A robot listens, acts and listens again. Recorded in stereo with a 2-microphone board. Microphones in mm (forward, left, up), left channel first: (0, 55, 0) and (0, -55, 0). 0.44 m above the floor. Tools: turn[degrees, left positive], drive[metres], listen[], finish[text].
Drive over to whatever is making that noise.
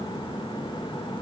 Action: listen[]
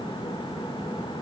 Action: listen[]
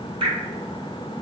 Thought: The dripping: about 50° right or 130° right.
Action: turn[-50]
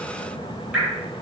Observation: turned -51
Thought: So it is at 15° right.
Action: turn[-15]
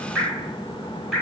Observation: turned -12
Action: drive[1.0]
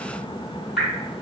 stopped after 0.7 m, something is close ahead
Action: finish[I am next to the dripping.]